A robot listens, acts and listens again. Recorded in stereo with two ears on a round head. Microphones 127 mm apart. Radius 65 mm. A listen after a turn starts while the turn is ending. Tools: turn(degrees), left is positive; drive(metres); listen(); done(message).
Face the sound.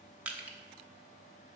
turn(degrees=-30)
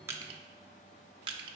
turn(degrees=-140)
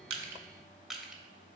done("Found it: crushing, straight ahead.")